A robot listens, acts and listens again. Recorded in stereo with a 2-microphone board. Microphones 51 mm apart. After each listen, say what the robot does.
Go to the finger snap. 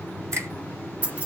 Turn 60° right.
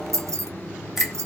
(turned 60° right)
Keep listening.
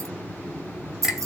Drive 1.0 m forward.
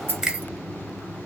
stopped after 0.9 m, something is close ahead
Turn 15° right.
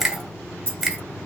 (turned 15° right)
Arrived at the finger snap, straight ahead.